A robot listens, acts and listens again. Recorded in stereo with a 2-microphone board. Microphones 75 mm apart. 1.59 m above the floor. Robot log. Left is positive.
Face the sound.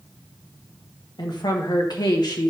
note: The woman speaking: about 65° left or 115° left.
cmd yaw +65
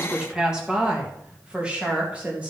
note: So it is at 15° right.
cmd yaw -15
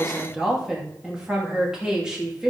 note: The woman speaking is now 10° right.
cmd yaw -10
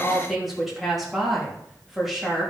end: Found it: a woman speaking, straight ahead.